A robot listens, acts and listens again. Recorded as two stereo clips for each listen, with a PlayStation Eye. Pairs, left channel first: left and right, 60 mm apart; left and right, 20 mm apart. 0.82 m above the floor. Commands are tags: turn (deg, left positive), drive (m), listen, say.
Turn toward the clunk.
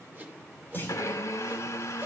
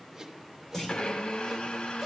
<turn deg="35"/>
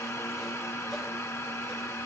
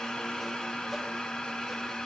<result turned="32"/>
<listen/>
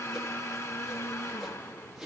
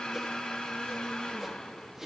<say>I heard a clunk, but can't make it out now. It was about 5° left or 115° left.</say>